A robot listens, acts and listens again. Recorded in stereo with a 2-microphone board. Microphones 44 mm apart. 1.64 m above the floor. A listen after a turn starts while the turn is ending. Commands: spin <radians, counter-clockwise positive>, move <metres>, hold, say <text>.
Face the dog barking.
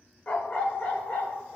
spin 1.05
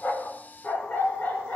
spin 0.70
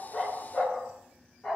say Facing the dog barking.